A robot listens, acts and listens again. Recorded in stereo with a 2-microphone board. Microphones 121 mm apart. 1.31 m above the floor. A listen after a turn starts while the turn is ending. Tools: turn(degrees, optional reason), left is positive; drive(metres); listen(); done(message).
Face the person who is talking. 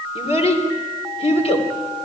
turn(degrees=65, reason="The child speaking: about 65° left or 115° left.")
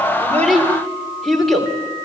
done("Found it: a child speaking, straight ahead, 2 to 4 m away.")